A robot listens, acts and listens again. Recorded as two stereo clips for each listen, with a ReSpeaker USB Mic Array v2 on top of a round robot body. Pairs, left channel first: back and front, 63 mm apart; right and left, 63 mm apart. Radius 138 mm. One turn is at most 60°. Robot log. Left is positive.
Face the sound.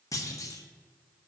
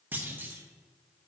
note: The clunk: 150° left.
cmd yaw +60
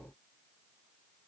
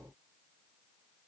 note: Nothing new. It was at 90° left.
cmd yaw +60
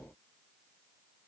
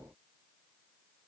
note: Nothing new. It was at 30° left.
cmd yaw +30
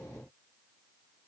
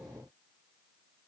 end: Facing where the clunk came from. I can't hear it now.